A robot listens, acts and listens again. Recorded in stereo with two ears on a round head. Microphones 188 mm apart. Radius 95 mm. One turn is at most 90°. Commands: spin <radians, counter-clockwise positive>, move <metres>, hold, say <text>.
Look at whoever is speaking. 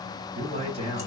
spin -0.52
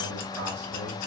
hold
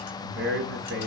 spin -1.57
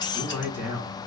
spin -0.17
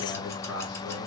say Found it: a man speaking, straight ahead.